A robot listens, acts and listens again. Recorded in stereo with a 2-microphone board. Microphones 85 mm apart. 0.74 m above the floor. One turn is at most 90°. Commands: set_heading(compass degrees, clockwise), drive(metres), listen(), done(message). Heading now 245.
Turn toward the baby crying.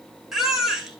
set_heading(275)
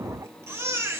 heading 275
set_heading(5)
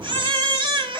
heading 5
set_heading(95)
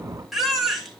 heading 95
done("Found it: a baby crying, straight ahead, 2 to 4 m away.")